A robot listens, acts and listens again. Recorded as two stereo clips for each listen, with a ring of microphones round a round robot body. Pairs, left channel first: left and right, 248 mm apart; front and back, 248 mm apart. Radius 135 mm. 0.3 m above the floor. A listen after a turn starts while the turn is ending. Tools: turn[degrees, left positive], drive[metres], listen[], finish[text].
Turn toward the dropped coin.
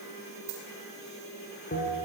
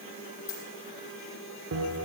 Thought: The dropped coin: 35° right.
Action: turn[-35]
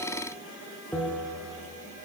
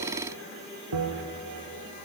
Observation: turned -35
Action: finish[I heard a dropped coin from this way, but can't make it out now.]